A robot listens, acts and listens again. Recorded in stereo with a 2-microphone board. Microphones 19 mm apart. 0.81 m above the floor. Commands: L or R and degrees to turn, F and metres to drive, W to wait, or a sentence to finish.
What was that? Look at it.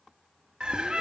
R50
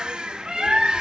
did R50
R65
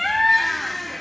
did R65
Found it: a bird, straight ahead.